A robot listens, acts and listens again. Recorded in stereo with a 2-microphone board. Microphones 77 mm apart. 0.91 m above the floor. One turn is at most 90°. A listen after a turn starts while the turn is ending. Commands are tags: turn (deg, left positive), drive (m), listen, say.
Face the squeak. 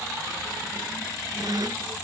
<turn deg="-55"/>
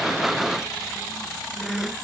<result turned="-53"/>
<say>Found it: a squeak, straight ahead.</say>